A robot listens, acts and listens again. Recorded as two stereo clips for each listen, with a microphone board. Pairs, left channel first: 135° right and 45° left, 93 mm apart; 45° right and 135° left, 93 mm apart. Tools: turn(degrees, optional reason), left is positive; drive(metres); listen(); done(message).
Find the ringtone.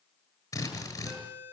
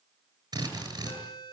turn(degrees=-20, reason="The ringtone: 20° right.")
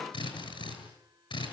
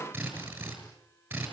listen()
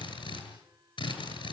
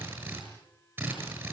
listen()
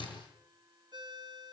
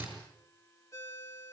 turn(degrees=10, reason="The ringtone is now 10° left.")
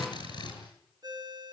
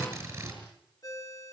done("Facing the ringtone, 2 to 4 m away.")